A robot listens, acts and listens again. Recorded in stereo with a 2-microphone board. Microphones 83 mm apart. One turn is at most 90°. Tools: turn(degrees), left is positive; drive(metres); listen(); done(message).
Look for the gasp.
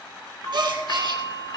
turn(degrees=-70)
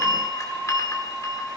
listen()
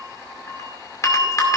done("I heard a gasp, but can't make it out now. It was about straight ahead or 40° right.")